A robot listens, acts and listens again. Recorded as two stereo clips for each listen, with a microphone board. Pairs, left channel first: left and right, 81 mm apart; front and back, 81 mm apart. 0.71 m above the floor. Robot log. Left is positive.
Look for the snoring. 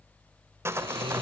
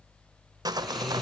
note: The snoring: 85° right.
cmd yaw -85
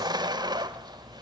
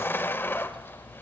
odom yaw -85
cmd idle
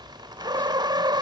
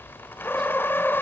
cmd idle
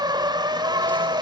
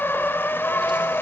end: Facing where the snoring came from. I can't hear it now.